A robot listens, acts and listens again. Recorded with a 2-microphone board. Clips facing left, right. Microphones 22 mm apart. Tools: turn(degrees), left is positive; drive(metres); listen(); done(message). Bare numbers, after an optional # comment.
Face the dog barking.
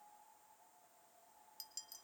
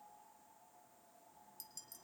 listen()
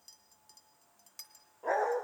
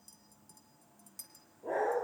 turn(90)
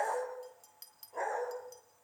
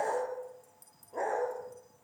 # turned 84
done("Facing the dog barking, over 4 m away.")